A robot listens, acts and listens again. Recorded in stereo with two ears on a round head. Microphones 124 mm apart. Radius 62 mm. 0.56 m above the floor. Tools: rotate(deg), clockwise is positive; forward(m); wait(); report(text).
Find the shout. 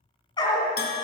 wait()
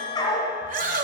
rotate(60)
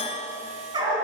wait()
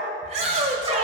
rotate(50)
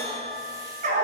wait()
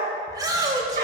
rotate(25)
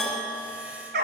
wait()
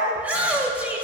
rotate(10)
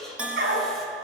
report("Facing the shout.")